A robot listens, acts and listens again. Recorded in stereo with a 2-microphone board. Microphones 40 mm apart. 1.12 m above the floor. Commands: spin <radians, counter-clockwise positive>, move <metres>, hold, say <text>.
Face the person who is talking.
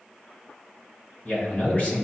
spin 0.70
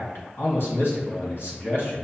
spin 1.75
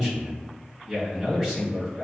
say Facing the man speaking.